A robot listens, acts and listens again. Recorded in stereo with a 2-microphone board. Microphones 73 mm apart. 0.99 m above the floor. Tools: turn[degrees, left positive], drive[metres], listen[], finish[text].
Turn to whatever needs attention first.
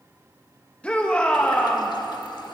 Thought: The shout: about 15° left or 165° left.
Action: turn[15]
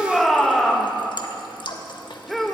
Action: finish[Found it: a shout, straight ahead.]